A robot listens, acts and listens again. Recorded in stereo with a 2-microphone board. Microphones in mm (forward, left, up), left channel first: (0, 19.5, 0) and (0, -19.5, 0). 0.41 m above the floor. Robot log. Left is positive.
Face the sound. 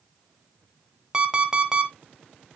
note: The alarm clock: about 20° right or 160° right.
cmd yaw -20
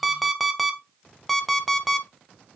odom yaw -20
end: Facing the alarm clock.